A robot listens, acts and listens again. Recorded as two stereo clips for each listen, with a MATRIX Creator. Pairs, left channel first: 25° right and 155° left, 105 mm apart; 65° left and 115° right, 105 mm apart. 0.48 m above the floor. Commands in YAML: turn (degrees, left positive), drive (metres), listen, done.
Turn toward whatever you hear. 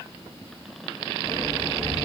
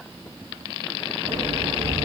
turn: -80
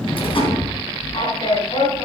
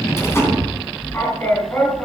done: "Found it: a sliding door, straight ahead, 2 to 4 m away."